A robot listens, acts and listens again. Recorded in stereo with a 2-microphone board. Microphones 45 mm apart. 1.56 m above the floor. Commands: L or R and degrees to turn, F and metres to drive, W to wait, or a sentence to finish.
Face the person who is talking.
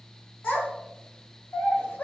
L55
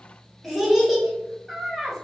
Facing the child speaking.